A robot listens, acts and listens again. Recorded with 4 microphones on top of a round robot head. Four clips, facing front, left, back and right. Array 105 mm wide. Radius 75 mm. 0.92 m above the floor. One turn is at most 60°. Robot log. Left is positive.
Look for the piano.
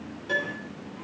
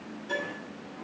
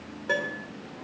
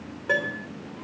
note: The piano: 120° right.
cmd yaw -60
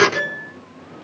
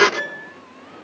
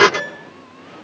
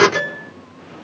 note: The piano is now 75° right.
cmd yaw -60
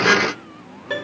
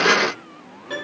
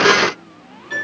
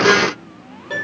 note: The piano is now 15° right.
cmd yaw -15
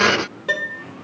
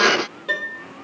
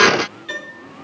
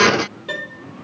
end: Facing the piano.